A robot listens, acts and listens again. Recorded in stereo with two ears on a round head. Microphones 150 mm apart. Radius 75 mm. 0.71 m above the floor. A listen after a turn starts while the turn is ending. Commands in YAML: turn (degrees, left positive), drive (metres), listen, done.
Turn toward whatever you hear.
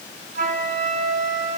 turn: -45
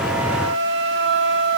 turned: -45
turn: -85
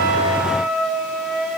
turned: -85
done: "Found it: a flute, straight ahead."